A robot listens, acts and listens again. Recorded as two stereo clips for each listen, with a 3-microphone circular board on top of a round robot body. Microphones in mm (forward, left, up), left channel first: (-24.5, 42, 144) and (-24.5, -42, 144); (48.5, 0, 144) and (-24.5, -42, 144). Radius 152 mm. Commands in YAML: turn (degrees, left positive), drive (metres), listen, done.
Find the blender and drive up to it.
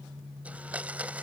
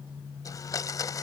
turn: -15
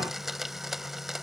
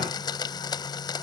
drive: 1.0
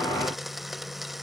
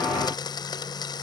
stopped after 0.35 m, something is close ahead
done: "Something is in my way. I am facing the blender but have not reached it."